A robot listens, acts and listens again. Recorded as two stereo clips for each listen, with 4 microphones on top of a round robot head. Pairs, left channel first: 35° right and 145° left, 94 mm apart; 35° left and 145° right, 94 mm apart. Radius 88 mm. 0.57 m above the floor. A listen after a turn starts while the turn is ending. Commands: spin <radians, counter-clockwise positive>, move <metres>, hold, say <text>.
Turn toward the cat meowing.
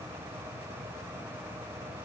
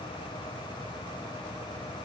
hold
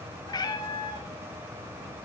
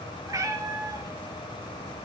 spin -1.48
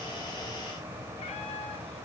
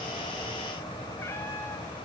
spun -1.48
hold
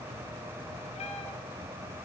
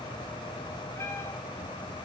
hold
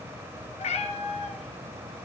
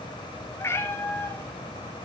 spin -0.52
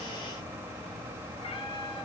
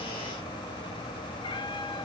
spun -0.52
say Found it: a cat meowing, straight ahead.